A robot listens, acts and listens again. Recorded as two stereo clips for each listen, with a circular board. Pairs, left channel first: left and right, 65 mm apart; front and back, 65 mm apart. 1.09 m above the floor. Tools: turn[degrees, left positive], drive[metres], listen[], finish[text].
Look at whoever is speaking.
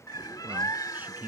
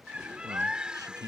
Thought: The man speaking: 150° right.
Action: turn[-150]
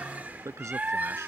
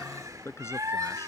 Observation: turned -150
Thought: The man speaking is now 50° right.
Action: turn[-50]
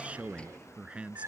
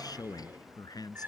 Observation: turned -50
Thought: The man speaking is now 15° right.
Action: turn[-15]
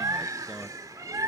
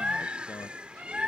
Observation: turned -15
Action: listen[]
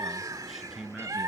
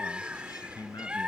Action: finish[Found it: a man speaking, straight ahead.]